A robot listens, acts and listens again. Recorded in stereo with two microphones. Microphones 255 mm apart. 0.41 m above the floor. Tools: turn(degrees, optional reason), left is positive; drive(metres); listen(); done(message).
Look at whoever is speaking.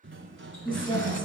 turn(degrees=20, reason="The woman speaking: about 20° left or 160° left.")
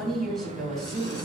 done("Found it: a woman speaking, straight ahead.")